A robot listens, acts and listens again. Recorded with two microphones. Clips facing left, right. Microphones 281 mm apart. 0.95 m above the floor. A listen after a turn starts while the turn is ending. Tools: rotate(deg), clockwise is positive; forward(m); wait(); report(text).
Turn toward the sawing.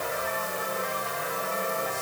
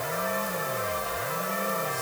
wait()
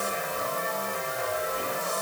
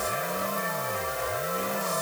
wait()
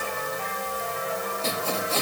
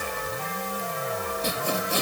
rotate(15)
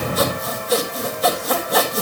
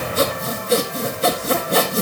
rotate(150)
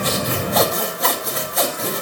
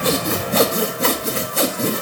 rotate(35)
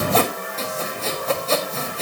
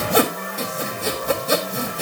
rotate(15)
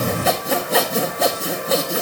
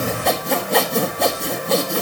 report("Facing the sawing.")